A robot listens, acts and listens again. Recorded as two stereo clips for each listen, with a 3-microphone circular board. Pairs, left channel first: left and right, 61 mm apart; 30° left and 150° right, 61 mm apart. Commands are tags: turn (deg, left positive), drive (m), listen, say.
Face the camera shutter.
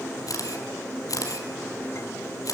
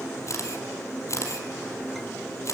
<turn deg="70"/>
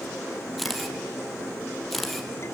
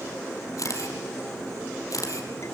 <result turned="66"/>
<say>Found it: a camera shutter, straight ahead, over 4 m away.</say>